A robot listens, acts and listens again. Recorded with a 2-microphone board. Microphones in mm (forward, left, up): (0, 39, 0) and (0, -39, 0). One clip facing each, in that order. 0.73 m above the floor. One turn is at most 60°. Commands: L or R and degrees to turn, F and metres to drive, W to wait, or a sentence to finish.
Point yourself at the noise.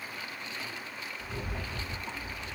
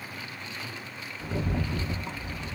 R60
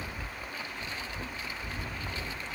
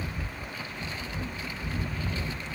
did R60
R20
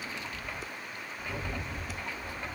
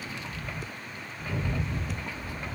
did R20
Found it: a rattle, straight ahead, 1 to 2 m away.